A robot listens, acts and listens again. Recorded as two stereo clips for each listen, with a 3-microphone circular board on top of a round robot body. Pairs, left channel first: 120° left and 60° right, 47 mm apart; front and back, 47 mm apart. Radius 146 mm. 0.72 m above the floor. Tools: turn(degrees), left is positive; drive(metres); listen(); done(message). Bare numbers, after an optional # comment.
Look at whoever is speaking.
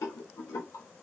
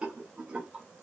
listen()
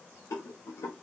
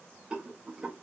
listen()
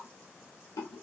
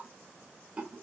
done("I can't make out anyone speaking, only a rattle.")